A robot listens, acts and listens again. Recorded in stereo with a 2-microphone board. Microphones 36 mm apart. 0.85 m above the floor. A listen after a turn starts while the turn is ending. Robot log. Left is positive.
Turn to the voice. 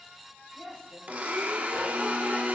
note: The woman speaking: about 70° left or 110° left.
cmd yaw +70
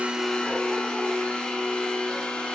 cmd idle
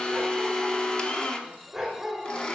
cmd idle
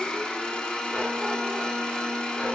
end: I heard a woman speaking, but can't make it out now. It was about straight ahead or 40° left.